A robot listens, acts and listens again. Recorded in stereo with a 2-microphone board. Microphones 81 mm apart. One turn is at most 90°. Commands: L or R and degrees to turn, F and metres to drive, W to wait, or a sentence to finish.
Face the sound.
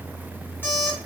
L25
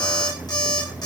L90
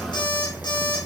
L70
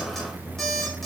Facing the alarm clock, 2 to 4 m away.